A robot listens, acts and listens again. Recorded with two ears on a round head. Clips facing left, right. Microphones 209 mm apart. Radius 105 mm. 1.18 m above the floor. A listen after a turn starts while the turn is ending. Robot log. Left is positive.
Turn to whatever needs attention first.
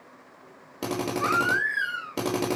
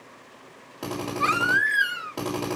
note: The baby crying: about 40° right or 140° right.
cmd yaw -40
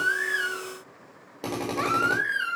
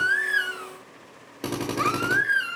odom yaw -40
end: Facing the baby crying, 2 to 4 m away.